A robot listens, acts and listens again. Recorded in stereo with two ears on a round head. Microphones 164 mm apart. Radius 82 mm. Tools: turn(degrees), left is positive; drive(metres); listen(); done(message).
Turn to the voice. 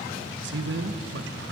turn(degrees=-65)
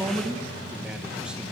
done("Found it: a man speaking, straight ahead, 1 to 2 m away.")